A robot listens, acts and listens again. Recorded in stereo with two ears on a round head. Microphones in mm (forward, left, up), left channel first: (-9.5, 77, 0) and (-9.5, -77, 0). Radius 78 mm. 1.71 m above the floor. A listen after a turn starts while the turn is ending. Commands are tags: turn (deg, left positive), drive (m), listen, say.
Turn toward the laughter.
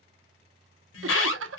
<turn deg="-90"/>
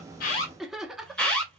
<say>Found it: laughter, straight ahead.</say>